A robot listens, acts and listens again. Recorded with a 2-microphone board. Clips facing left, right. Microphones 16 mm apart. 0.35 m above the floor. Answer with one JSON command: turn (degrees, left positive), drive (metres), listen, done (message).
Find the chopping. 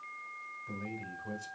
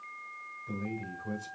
{"listen": true}
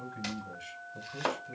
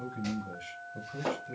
{"turn": 45}
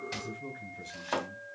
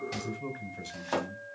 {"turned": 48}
{"done": "Facing the chopping."}